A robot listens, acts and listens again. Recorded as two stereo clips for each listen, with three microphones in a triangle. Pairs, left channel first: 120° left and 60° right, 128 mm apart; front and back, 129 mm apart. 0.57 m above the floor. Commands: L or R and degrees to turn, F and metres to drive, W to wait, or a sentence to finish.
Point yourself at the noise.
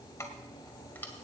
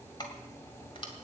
L45
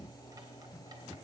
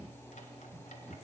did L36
L10
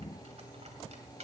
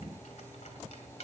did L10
R30
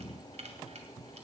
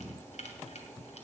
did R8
R30
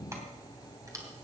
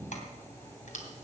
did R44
Facing the keys jangling, 2 to 4 m away.